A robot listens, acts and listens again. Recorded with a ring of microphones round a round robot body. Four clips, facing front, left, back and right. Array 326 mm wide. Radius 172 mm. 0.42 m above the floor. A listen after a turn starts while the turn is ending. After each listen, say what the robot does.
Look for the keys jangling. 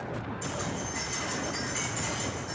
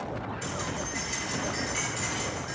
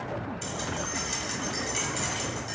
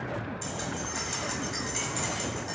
Turn 135° right.
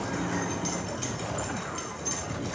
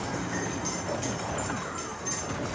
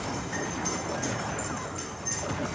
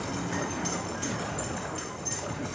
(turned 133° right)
Found it: keys jangling, straight ahead, 1 to 2 m away.